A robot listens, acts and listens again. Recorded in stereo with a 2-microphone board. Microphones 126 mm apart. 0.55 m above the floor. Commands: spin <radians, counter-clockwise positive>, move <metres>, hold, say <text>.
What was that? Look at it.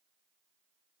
hold
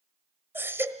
spin -0.35
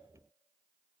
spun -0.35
hold
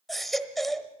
say Found it: a baby crying, straight ahead, 1 to 2 m away.